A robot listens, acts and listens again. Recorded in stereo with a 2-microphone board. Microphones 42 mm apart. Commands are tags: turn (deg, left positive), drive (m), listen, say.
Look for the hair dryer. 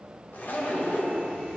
<listen/>
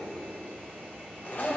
<listen/>
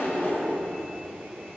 <say>I can't make out a hair dryer to turn to.</say>